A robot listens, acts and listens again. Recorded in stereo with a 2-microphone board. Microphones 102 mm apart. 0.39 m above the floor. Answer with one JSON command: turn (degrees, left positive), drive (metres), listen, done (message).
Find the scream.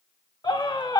{"turn": 50}
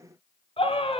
{"turn": 80}
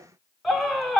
{"done": "Found it: a scream, straight ahead, 2 to 4 m away."}